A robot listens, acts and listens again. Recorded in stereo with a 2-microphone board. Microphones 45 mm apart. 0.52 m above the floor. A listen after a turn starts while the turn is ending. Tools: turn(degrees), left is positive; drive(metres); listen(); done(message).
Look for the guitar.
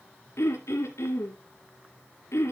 listen()
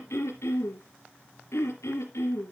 listen()
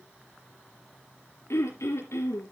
done("I can't make out a guitar to turn to.")